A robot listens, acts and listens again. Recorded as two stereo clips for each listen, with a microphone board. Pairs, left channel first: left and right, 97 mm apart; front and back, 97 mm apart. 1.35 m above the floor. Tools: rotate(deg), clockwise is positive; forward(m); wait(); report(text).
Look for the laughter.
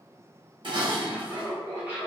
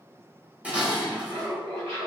rotate(165)
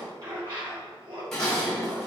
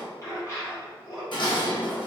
rotate(50)
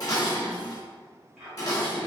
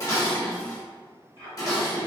rotate(10)
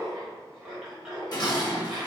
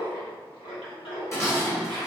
report("Found it: laughter, straight ahead, 1 to 2 m away.")